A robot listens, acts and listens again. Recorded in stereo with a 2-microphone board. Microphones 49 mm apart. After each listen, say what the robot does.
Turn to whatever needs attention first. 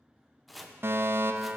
Turn 50° right.
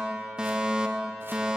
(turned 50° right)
Turn 15° right.
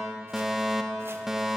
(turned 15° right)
Facing the fire alarm.